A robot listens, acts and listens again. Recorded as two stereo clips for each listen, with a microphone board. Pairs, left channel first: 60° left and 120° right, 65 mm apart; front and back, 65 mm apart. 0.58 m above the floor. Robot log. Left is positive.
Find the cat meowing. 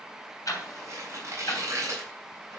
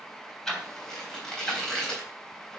cmd idle
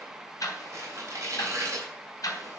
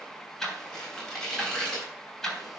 cmd idle
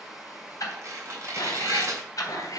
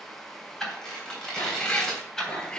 note: The cat meowing: 75° left.
cmd yaw +75
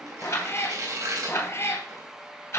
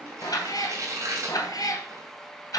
note: The cat meowing is now 15° left.
cmd yaw +15
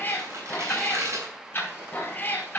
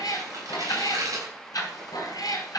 end: Facing the cat meowing.